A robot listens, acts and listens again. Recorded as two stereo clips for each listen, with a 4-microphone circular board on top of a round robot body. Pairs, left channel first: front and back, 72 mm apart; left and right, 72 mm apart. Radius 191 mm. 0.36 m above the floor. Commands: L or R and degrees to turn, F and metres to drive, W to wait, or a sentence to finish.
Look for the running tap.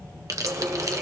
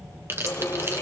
L140
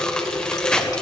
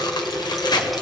Found it: a running tap, straight ahead, 1 to 2 m away.